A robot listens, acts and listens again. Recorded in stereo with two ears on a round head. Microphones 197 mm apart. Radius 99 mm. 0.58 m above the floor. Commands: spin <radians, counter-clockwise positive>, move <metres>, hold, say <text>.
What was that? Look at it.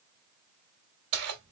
spin -1.57
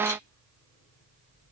hold
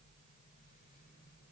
hold
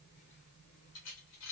spin 1.13
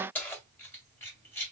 spin 0.17
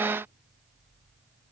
hold
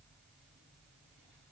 hold
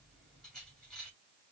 say Found it: keys jangling, straight ahead.